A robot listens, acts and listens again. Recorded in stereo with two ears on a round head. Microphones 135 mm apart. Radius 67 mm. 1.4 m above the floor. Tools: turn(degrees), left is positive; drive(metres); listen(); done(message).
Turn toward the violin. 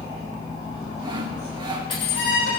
turn(degrees=70)
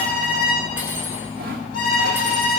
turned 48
turn(degrees=60)
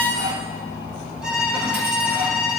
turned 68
turn(degrees=-10)
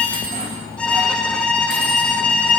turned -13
done("Facing the violin.")